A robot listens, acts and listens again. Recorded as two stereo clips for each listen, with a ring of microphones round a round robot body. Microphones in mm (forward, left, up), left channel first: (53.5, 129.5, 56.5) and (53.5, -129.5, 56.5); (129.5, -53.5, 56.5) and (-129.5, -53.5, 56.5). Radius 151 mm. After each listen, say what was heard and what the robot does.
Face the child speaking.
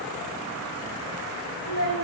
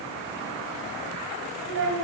The child speaking: 140° right. Turn 140° right.
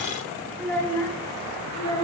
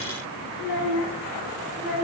The child speaking is now 15° left. Turn 15° left.
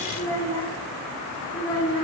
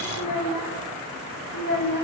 The child speaking is now 20° left. Turn 20° left.
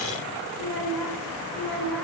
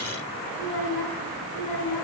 Facing the child speaking.